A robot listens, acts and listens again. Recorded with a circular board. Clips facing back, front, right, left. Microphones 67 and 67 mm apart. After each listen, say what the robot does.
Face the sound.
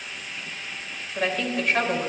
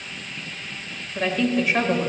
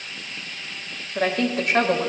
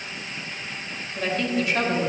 Turn 75° right.
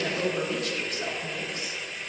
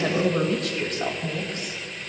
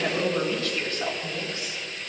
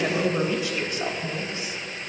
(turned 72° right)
Turn 25° left.
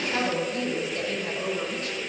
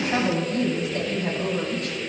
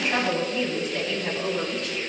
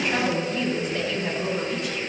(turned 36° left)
Turn 10° left.
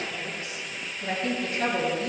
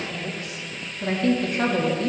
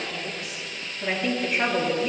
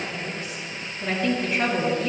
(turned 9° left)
Found it: a woman speaking, straight ahead.